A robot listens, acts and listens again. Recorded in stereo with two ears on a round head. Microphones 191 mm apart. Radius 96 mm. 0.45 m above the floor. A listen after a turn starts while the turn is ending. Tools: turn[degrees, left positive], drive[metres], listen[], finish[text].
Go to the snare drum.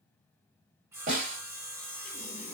Thought: The snare drum: about 40° right or 140° right.
Action: turn[-40]
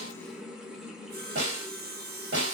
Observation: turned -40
Thought: So it is at 95° right.
Action: turn[-95]
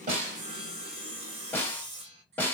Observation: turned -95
Thought: The snare drum is now 10° left.
Action: turn[10]
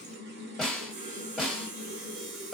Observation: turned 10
Action: drive[1.0]
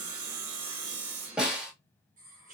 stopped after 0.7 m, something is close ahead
Action: finish[Arrived at the snare drum, straight ahead.]